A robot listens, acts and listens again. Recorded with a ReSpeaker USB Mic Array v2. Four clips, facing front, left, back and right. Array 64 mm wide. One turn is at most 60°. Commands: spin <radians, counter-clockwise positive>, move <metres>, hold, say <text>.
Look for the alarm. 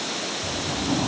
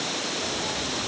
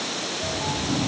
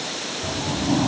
hold
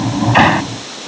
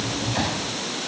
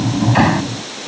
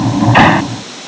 hold
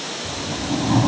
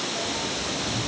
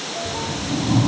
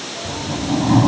say I can't make out an alarm to turn to.